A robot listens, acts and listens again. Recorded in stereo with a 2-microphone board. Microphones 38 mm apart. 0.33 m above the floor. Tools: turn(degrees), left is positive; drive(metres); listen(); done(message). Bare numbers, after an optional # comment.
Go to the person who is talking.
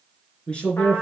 # The man speaking: about 30° left or 150° left.
turn(30)
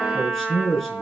drive(1.0)
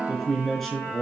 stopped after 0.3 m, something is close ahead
done("Something is in my way. I am facing the man speaking but have not reached it.")